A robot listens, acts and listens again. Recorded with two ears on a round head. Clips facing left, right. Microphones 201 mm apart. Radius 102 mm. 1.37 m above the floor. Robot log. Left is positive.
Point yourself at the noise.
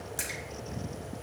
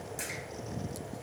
note: The splash: about 20° left or 160° left.
cmd yaw +20
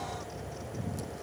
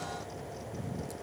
cmd idle
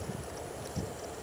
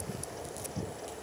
end: I heard a splash, but can't make it out now. It was about straight ahead or 140° left.